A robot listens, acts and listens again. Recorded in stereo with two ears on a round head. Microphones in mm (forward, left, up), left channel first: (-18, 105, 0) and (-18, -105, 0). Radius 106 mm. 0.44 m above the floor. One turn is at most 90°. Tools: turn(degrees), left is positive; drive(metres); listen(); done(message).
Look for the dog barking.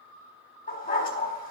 turn(degrees=40)
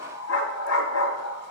turn(degrees=90)
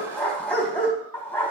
done("Facing the dog barking.")